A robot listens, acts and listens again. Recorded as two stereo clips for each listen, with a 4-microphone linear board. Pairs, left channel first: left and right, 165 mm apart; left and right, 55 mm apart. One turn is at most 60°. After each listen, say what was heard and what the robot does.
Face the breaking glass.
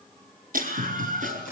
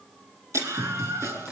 The breaking glass: about 65° right or 115° right. Turn 60° right.
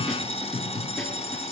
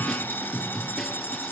Keep listening.
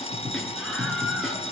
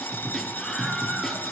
I heard breaking glass, but can't make it out now. It was about 5° right or 55° right.